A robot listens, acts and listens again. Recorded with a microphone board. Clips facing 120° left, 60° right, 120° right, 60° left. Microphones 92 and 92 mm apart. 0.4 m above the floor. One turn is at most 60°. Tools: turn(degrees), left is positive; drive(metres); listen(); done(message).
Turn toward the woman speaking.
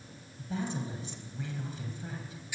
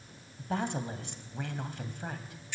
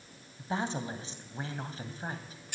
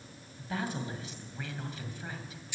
turn(degrees=-60)
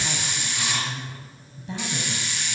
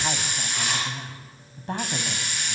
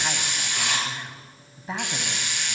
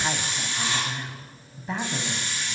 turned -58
turn(degrees=-35)
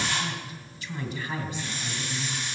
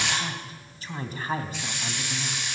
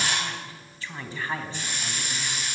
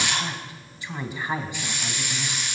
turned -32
turn(degrees=-15)
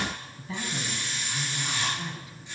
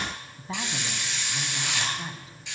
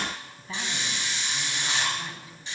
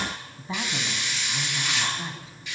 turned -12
done("Facing the woman speaking.")